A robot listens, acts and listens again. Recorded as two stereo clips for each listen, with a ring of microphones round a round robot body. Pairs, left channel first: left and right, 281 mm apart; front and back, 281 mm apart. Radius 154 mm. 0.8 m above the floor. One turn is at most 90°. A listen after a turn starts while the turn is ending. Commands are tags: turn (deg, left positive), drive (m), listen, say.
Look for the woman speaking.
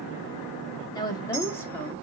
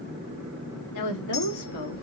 <turn deg="10"/>
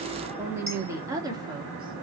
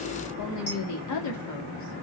<turn deg="-15"/>
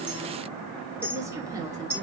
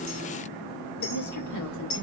<turn deg="-15"/>
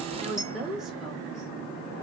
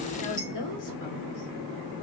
<say>Facing the woman speaking, 2 to 4 m away.</say>